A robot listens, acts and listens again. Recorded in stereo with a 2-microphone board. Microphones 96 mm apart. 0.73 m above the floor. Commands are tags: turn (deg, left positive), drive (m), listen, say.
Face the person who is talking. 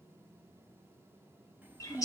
<turn deg="-20"/>
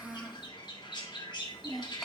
<say>Found it: a child speaking, straight ahead.</say>